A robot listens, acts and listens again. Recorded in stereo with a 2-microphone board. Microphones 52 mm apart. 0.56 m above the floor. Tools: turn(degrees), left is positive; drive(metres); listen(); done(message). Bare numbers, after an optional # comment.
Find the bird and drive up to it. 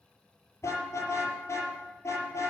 listen()
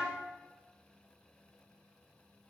listen()
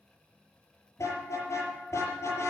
done("I can't make out a bird, only a car horn.")